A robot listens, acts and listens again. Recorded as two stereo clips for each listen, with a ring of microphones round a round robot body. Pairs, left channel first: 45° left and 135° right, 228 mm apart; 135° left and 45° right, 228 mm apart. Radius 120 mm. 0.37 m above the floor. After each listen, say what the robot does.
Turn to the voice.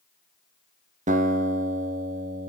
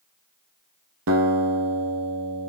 Keep listening.
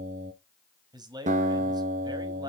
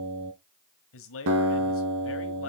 Turn 155° left.
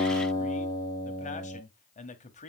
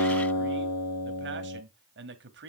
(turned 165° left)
Turn 10° right.
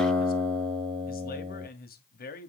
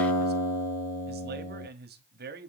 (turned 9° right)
Found it: a man speaking, straight ahead, 1 to 2 m away.